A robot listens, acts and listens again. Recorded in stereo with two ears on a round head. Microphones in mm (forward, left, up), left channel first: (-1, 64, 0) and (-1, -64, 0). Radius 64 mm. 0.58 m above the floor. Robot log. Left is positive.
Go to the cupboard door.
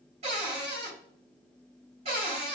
note: The cupboard door: about 45° right or 135° right.
cmd yaw -45
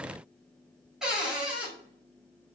cmd fwd 1.0
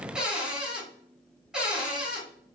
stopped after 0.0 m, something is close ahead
end: Blocked. The cupboard door is further on, straight ahead.